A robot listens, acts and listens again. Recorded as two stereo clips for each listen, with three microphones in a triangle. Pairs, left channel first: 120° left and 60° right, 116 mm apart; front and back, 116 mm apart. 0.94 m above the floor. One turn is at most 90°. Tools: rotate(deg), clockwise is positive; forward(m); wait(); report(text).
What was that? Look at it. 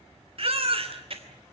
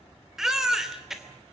rotate(90)
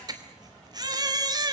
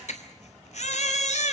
report("Found it: a baby crying, straight ahead, 2 to 4 m away.")